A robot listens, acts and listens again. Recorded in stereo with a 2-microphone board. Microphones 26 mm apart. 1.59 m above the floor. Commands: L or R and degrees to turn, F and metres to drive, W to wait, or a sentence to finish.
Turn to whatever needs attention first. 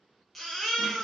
L30
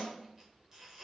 W
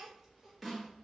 W
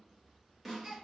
R20
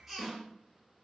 Found it: a baby crying, straight ahead, 1 to 2 m away.